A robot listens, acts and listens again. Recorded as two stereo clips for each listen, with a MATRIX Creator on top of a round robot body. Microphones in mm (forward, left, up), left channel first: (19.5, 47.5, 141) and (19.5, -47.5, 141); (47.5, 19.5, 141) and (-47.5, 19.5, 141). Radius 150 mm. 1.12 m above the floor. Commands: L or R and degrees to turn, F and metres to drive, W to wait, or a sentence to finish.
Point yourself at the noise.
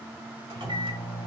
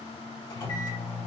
R45
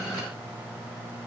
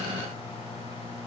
L10
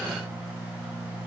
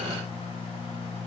Found it: a microwave, straight ahead, 1 to 2 m away.